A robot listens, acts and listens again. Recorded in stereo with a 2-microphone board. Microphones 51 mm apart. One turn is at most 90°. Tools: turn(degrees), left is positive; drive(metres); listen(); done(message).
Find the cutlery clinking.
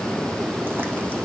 listen()
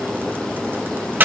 listen()
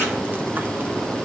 done("I can't make out cutlery clinking, only frying.")